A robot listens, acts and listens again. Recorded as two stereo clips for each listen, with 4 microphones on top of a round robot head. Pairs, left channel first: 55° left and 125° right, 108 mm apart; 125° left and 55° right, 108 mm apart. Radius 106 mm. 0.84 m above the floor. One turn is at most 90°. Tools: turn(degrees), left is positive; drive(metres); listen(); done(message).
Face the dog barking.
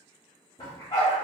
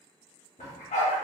turn(degrees=90)
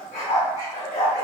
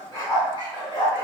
turn(degrees=85)
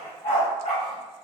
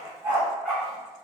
turn(degrees=25)
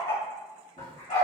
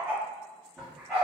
turn(degrees=25)
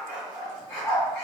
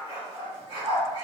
turn(degrees=-10)
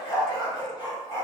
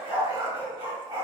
done("Facing the dog barking, 2 to 4 m away.")